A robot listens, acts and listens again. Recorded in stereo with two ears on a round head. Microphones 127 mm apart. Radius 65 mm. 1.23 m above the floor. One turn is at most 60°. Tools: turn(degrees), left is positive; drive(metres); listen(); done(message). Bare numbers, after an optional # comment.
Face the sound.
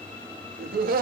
# The laughter: about 70° right or 110° right.
turn(-60)
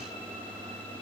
listen()
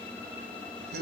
# So it is at 90° right.
turn(-60)
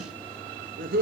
# The laughter is now 65° right.
turn(-60)
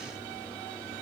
listen()
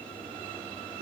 # The laughter is now 35° right.
turn(-35)
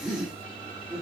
done("Facing the laughter, 1 to 2 m away.")